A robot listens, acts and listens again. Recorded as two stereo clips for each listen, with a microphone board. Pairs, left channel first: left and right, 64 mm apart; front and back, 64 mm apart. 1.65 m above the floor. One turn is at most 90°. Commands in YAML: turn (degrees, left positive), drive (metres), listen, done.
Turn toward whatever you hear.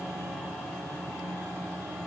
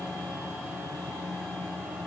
listen: true
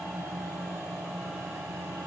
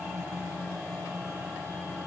listen: true
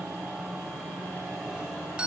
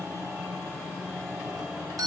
turn: -90
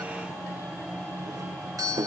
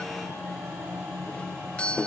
turn: -70
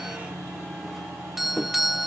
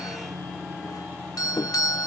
done: "Facing the doorbell."